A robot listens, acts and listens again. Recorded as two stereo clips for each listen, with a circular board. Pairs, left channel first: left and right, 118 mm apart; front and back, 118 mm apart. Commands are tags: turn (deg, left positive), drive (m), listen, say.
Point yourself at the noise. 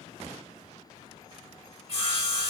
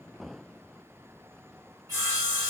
<turn deg="120"/>
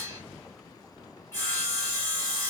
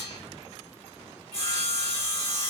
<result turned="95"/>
<turn deg="25"/>
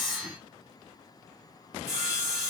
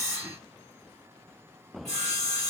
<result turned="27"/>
<say>Found it: sawing, straight ahead.</say>